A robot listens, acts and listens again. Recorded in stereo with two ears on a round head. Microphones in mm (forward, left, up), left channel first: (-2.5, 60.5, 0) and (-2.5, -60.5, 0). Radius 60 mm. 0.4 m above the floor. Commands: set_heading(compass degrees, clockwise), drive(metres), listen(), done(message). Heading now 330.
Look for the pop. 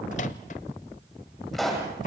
set_heading(300)
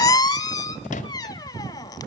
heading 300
listen()
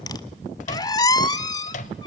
done("I heard a pop, but can't make it out now. It was about 30° right or 150° left.")